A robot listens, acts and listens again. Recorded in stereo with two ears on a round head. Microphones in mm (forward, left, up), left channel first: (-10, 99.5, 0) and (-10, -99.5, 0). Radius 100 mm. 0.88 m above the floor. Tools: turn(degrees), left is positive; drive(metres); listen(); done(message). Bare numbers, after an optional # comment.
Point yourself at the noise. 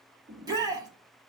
# The shout: about 20° right or 160° right.
turn(-20)
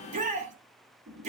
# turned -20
# So it is at 145° right.
turn(-145)
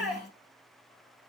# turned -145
done("Facing the shout, 2 to 4 m away.")